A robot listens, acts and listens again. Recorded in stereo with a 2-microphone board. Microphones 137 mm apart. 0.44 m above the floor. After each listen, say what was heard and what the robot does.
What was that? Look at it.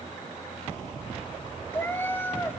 Turn 30° left.
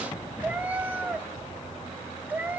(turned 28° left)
So it is at 10° right. Turn 10° right.
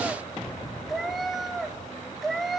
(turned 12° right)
Facing the cat meowing.